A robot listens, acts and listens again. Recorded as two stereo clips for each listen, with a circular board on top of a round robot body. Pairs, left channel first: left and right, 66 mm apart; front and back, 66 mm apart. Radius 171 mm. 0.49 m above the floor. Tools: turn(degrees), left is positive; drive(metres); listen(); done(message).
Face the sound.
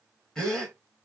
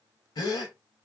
done("Facing the gasp.")